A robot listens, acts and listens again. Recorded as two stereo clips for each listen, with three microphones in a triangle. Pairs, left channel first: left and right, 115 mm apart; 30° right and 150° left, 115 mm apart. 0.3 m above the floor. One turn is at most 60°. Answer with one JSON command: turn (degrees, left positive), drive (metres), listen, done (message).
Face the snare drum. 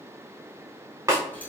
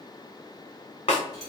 {"turn": -30}
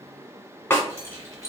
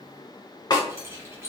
{"turn": 20}
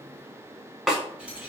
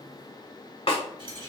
{"done": "Facing the snare drum."}